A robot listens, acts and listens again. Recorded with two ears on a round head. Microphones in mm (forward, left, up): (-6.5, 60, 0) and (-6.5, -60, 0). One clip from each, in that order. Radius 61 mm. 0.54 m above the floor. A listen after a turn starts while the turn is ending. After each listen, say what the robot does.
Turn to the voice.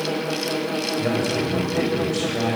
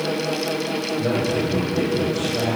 Turn 65° left.
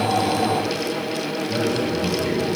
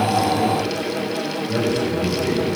Turn 10° left.
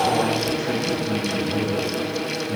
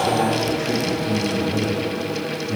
Found it: a man speaking, straight ahead, 2 to 4 m away.